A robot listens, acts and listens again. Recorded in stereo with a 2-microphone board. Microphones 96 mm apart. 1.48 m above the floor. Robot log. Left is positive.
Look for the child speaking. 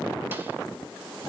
cmd idle
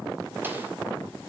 cmd idle
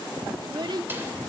note: The child speaking: about 50° right or 130° right.
cmd yaw -50
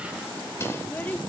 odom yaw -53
cmd idle
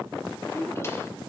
note: So it is at 25° left.
cmd yaw +25
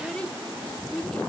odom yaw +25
note: The child speaking is now 10° left.
cmd yaw +10
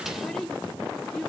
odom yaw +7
end: Facing the child speaking, 2 to 4 m away.